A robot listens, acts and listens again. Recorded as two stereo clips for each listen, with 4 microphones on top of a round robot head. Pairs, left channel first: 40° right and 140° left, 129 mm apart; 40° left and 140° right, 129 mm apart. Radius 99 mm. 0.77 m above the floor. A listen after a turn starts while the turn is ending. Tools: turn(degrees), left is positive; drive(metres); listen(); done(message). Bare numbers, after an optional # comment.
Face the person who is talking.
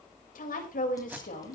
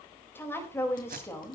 # The woman speaking: 30° right.
turn(-30)
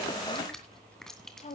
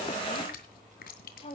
done("Found it: a woman speaking, straight ahead.")